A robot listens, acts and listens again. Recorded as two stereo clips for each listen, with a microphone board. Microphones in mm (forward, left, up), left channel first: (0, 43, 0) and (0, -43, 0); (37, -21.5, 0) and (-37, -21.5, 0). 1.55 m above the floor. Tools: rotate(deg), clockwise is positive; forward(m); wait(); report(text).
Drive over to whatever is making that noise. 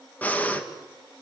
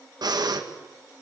rotate(-165)
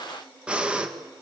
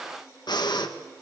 rotate(10)
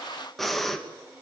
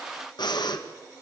forward(1.0)
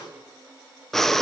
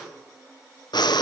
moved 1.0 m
forward(1.0)
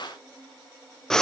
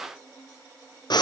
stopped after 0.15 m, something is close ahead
report("I am next to the breathing.")